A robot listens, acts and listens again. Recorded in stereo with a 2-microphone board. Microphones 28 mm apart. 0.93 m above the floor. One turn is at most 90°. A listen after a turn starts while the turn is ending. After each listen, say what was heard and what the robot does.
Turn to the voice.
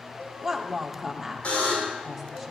Turn 30° right.
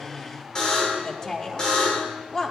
So it is at 25° left. Turn 25° left.
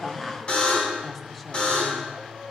The woman speaking is now 10° left. Turn 10° left.
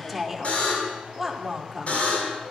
Found it: a woman speaking, straight ahead, 2 to 4 m away.